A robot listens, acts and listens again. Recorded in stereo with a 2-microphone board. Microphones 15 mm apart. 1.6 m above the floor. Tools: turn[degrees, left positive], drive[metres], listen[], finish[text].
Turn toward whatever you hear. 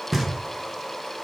Action: turn[30]
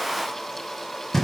Thought: So it is at 150° left.
Action: turn[150]
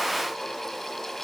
Action: listen[]
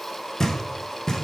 Thought: The knocking is now 30° left.
Action: turn[30]
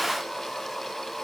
Action: listen[]
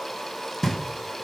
Action: finish[Found it: knocking, straight ahead, 1 to 2 m away.]